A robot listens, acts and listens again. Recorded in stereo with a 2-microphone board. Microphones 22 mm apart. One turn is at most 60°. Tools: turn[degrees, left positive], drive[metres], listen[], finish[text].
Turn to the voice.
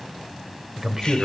Thought: The man speaking: about 20° right or 160° right.
Action: turn[-20]
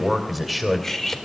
Action: finish[Found it: a man speaking, straight ahead, 2 to 4 m away.]